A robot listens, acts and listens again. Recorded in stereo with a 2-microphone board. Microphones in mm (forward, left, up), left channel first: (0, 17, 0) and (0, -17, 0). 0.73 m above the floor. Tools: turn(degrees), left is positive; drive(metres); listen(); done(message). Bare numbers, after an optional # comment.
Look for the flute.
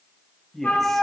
# The flute: about 70° left or 110° left.
turn(70)
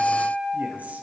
# So it is at 10° left.
turn(10)
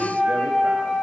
done("Facing the flute.")